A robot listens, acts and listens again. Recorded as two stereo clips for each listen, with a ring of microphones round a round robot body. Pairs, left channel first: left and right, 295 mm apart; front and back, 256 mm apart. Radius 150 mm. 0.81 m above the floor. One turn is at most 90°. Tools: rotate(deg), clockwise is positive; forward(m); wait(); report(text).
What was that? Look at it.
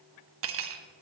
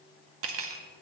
rotate(90)
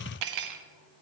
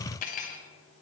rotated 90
rotate(65)
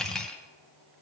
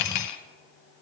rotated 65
report("Found it: cutlery clinking, straight ahead, under 1 m away.")